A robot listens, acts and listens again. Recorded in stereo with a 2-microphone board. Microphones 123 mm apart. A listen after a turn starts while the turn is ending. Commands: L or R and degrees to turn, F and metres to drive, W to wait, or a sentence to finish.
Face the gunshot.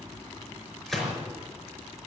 L30
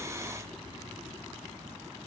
W
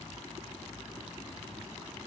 I heard a gunshot, but can't make it out now. It was about 30° right or 150° left.